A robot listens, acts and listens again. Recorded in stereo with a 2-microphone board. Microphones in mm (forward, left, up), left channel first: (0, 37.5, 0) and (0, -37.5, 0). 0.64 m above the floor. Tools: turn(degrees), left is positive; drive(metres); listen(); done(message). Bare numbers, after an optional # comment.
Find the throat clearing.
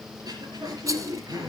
# The throat clearing: about 60° right or 120° right.
turn(-60)
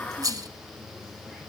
listen()
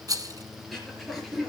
done("Found it: throat clearing, straight ahead.")